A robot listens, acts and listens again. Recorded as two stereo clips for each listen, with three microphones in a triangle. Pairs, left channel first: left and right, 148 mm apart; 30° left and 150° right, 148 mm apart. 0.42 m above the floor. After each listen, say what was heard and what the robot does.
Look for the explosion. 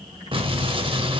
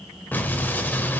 The explosion: 45° right. Turn 45° right.
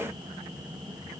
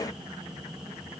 Facing where the explosion came from. I can't hear it now.